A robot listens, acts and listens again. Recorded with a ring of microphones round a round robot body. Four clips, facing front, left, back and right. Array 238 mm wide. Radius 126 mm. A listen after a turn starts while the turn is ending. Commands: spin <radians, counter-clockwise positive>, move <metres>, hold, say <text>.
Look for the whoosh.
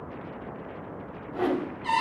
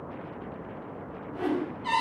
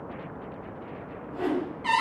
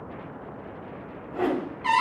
spin -1.05
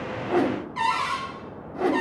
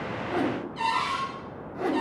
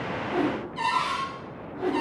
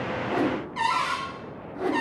say Facing the whoosh, 1 to 2 m away.